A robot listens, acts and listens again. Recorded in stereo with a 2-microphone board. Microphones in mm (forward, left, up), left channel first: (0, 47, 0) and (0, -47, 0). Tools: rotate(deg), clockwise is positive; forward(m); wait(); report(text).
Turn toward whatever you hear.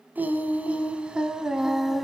rotate(-30)
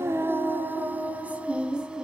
rotate(30)
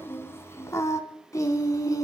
rotate(-40)
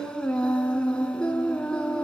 rotate(-10)
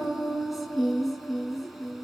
report("Facing the singing.")